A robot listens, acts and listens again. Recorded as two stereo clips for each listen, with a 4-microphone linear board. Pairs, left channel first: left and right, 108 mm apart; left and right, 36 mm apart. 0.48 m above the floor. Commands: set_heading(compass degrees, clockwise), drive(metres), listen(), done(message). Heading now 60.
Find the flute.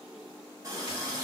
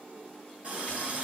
listen()
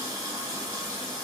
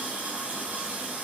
listen()
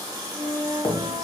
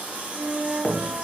set_heading(125)
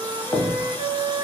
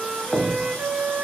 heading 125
set_heading(175)
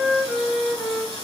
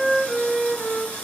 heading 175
set_heading(160)
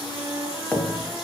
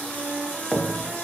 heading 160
done("Found it: a flute, straight ahead, under 1 m away.")